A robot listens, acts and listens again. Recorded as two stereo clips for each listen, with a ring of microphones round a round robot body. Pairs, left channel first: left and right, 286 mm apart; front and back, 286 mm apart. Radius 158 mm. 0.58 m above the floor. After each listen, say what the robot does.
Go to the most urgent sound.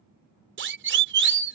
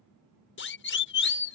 Turn 45° right.
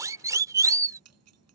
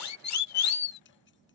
Turn 10° right.
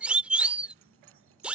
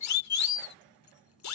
Drive 1.0 m forward.
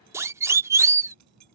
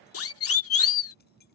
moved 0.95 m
Turn 10° right.
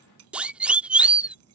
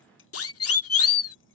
Drive 1.0 m forward.
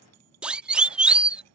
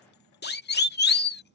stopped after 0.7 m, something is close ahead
I am next to the siren.